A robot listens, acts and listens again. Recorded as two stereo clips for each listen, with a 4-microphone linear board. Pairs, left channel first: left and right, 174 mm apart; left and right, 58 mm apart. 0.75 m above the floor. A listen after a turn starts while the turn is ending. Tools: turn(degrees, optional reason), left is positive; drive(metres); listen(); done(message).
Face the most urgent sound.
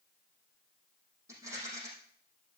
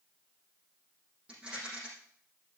listen()
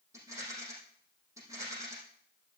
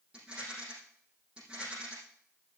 listen()
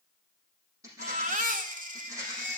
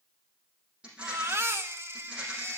turn(degrees=-50, reason="The baby crying: about 50° right or 130° right.")
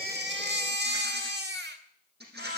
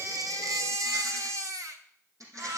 turn(degrees=-75, reason="So it is at 75° right.")
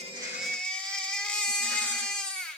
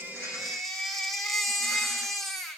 done("Found it: a baby crying, straight ahead.")